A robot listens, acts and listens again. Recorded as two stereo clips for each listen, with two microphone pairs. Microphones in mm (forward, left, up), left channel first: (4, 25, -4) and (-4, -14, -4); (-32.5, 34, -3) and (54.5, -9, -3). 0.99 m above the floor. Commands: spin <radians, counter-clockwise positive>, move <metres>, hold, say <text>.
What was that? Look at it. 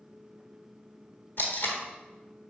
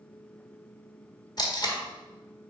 spin 1.92
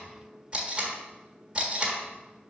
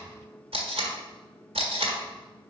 spin -0.61
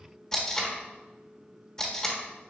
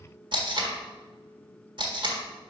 spin 0.17
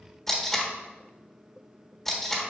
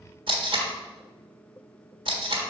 say Facing the tape being pulled.